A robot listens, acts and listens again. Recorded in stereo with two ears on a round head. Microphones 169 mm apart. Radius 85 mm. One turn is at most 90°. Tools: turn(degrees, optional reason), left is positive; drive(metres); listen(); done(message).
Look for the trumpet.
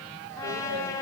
turn(degrees=30)
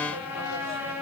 turn(degrees=-15, reason="So it is at 15° right.")
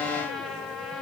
done("Facing the trumpet.")